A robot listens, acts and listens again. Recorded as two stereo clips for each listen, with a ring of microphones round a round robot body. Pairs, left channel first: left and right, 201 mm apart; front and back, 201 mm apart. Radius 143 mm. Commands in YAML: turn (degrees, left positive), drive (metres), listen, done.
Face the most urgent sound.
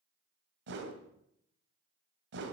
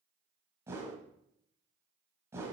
listen: true
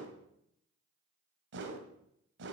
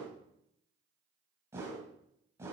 listen: true
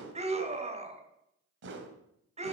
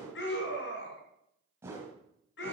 turn: -35
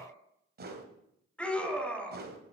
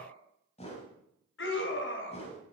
done: "Found it: a scream, straight ahead, 2 to 4 m away."